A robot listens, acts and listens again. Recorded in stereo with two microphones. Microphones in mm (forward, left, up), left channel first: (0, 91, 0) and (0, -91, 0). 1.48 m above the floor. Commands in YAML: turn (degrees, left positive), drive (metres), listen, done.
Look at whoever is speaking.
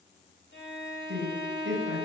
turn: -90
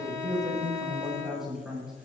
done: "Facing the man speaking."